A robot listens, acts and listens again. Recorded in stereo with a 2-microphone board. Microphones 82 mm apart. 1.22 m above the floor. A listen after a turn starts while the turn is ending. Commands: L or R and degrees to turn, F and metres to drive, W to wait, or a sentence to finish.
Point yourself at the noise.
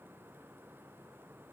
W
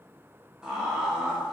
R30
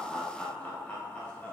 L20
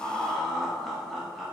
Found it: laughter, straight ahead, 1 to 2 m away.